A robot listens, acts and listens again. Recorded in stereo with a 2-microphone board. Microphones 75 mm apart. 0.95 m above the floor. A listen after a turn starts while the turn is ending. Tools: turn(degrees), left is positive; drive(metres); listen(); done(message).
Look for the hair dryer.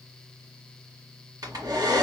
turn(degrees=-55)
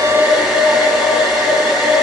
done("Facing the hair dryer, 2 to 4 m away.")